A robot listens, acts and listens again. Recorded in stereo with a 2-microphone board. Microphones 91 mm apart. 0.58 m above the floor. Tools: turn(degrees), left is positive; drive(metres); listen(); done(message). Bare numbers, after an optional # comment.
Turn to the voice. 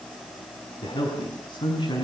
# The man speaking: about 55° left or 125° left.
turn(55)
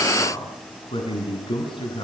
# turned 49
# So it is at 70° left.
turn(70)
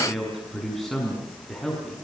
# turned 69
done("Facing the man speaking.")